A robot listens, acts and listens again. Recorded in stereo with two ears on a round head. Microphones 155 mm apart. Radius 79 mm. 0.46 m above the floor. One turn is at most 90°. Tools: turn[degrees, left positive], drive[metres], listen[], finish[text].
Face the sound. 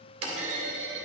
Thought: The clunk: about 35° right or 145° right.
Action: turn[-35]
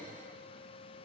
Action: listen[]
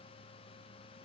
Action: finish[I heard a clunk, but can't make it out now. It was about straight ahead or 110° right.]